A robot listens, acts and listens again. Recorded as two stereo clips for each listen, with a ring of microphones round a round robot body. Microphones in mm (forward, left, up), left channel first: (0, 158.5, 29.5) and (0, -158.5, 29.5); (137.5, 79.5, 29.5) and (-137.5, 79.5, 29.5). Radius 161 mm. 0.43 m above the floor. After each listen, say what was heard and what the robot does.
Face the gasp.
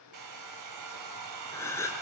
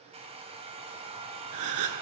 The gasp: 170° left. Turn 170° left.
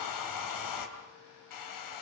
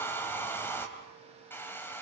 Facing where the gasp came from. I can't hear it now.